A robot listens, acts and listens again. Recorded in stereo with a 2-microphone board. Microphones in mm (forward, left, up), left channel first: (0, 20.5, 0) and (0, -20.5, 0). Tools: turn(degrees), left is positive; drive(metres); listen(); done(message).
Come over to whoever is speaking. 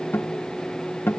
listen()
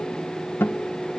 listen()
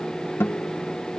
done("I can't make out anyone speaking, only a guitar.")